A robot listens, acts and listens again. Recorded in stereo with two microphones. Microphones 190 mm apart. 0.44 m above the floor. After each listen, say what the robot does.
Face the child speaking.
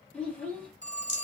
Turn 30° left.
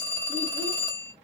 Keep listening.
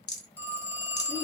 Keep listening.
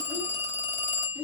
Turn 25° right.
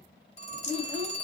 Facing the child speaking.